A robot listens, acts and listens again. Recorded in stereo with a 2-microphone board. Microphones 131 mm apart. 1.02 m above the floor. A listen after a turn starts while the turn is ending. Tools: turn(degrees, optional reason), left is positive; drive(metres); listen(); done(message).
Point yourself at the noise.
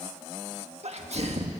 turn(degrees=-55, reason="The sneeze: about 55° right or 125° right.")
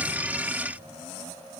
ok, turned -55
listen()
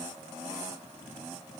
done("I heard a sneeze, but can't make it out now. It was about straight ahead or 70° right.")